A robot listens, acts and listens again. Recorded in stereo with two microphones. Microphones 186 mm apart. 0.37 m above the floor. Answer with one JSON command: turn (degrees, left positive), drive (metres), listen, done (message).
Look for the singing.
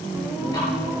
{"turn": -30}
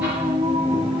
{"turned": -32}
{"turn": -150}
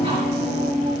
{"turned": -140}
{"turn": -45}
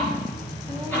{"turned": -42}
{"listen": true}
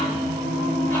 {"turn": -40}
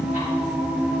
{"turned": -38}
{"done": "Found it: singing, straight ahead."}